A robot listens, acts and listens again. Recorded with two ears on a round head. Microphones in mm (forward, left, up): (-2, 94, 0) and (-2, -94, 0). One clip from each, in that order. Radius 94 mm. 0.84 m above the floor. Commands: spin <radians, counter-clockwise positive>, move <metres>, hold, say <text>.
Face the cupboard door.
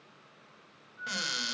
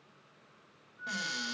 spin 0.52
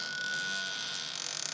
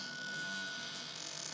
spin 2.01
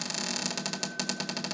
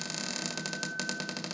say Found it: a cupboard door, straight ahead.